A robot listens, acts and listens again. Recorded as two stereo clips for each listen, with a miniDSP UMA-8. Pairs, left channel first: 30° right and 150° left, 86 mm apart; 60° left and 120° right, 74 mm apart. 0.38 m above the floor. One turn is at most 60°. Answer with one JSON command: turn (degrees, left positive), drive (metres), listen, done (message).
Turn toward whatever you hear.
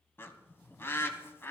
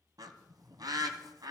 {"turn": -60}
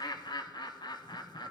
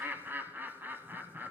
{"turn": -60}
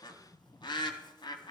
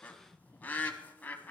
{"done": "Found it: a bird, straight ahead."}